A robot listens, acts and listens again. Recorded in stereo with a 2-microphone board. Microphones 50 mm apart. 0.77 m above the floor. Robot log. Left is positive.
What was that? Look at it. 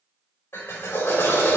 note: The drill: about 60° left or 120° left.
cmd yaw +60
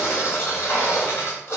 note: So it is at 60° left.
cmd yaw +60
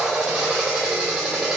note: The drill is now 10° right.
cmd yaw -10
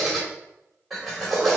end: Facing the drill, 2 to 4 m away.